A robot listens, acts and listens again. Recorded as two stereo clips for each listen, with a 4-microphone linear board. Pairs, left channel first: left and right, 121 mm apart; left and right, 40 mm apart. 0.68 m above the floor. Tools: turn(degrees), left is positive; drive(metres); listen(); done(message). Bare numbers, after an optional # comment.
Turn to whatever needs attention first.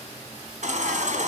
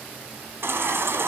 turn(-90)
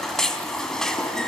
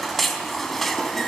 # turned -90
done("Found it: a baby crying, straight ahead.")